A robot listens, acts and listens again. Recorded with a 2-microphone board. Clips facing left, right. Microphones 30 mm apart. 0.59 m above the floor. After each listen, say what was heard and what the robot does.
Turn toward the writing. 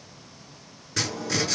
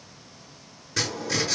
Turn 30° left.
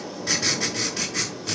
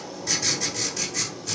So it is at 145° left. Turn 145° left.
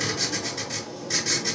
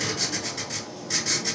Facing the writing.